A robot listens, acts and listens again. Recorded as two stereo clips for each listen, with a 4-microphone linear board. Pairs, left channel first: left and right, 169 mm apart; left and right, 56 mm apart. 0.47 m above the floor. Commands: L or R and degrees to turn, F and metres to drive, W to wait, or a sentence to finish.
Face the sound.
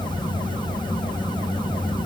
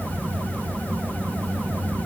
W
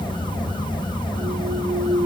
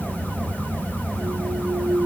R65
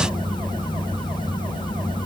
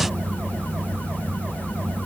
W
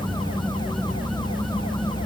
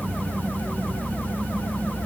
I heard a clunk, but can't make it out now. It was about straight ahead or 50° right.